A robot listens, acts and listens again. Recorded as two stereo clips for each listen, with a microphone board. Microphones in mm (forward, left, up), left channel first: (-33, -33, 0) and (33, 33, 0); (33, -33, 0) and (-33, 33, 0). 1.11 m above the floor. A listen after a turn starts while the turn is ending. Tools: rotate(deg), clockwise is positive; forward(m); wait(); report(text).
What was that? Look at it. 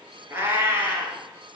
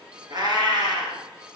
rotate(-100)
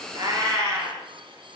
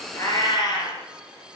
rotate(10)
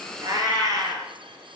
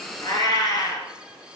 report("Facing the cat meowing.")